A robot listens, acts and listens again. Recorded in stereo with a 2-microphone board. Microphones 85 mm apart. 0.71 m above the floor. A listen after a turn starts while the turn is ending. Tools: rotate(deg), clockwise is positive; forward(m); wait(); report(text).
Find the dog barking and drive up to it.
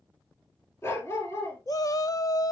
rotate(-30)
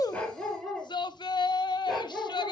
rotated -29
forward(1.0)
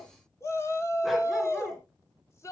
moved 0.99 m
wait()
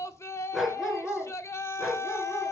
forward(1.0)
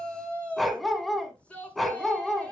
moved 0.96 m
forward(1.0)
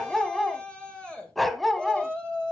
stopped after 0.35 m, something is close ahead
report("I am next to the dog barking.")